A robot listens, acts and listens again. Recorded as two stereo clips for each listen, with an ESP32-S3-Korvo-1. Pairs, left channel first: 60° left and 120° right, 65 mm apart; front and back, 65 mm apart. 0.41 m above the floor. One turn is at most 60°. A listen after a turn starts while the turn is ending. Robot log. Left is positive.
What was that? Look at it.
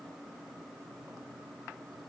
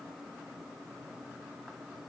cmd idle
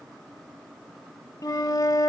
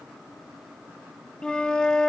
note: The flute: 75° left.
cmd yaw +60
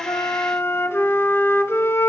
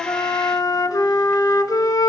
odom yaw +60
note: The flute is now 10° left.
cmd yaw +10
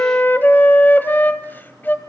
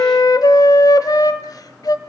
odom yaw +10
end: Found it: a flute, straight ahead.